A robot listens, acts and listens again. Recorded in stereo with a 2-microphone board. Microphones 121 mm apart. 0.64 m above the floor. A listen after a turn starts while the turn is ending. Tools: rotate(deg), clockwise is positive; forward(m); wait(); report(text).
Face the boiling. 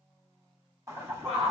rotate(30)
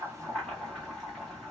report("Facing the boiling.")